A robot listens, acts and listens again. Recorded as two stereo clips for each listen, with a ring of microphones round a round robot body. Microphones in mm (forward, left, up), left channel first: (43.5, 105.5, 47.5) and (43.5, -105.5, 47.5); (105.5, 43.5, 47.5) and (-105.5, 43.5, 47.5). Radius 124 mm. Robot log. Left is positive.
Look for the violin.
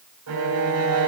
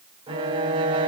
note: The violin: 110° right.
cmd yaw -110
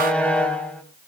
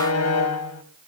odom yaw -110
end: Found it: a violin, straight ahead, 2 to 4 m away.